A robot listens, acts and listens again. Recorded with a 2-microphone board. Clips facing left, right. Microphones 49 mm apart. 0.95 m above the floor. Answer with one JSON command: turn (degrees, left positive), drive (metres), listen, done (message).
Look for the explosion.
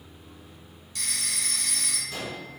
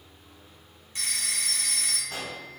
{"turn": -60}
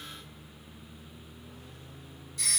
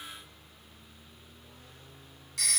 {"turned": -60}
{"listen": true}
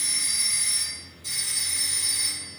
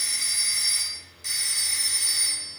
{"done": "I heard an explosion, but can't make it out now. It was about straight ahead or 60° right."}